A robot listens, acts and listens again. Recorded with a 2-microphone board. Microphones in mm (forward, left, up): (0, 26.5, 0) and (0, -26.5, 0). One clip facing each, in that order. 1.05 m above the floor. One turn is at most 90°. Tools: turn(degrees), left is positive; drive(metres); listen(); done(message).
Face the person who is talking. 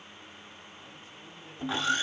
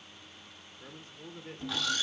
turn(degrees=-50)
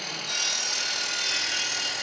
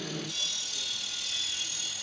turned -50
listen()
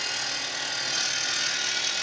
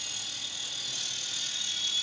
listen()
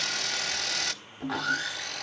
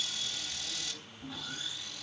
done("I heard a man speaking, but can't make it out now. It was about straight ahead or 80° right.")